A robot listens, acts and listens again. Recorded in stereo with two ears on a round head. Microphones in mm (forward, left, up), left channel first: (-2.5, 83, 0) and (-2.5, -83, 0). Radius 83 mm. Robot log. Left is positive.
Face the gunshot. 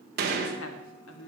note: The gunshot: about 55° right or 125° right.
cmd yaw -55
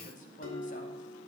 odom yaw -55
cmd idle
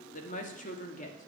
end: I heard a gunshot, but can't make it out now. It was about straight ahead or 70° right.